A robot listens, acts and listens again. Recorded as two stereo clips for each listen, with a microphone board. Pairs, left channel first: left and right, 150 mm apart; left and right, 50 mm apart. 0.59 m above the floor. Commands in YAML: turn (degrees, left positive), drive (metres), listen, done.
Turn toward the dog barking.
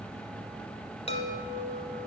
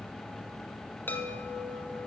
listen: true
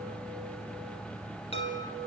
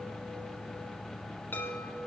listen: true
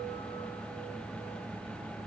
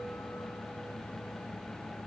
done: "I can't make out a dog barking to turn to."